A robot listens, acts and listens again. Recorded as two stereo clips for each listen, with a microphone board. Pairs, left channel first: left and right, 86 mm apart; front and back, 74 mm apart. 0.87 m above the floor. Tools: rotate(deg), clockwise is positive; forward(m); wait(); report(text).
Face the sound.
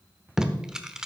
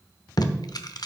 rotate(10)
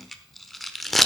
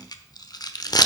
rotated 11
report("Found it: tape being pulled, straight ahead.")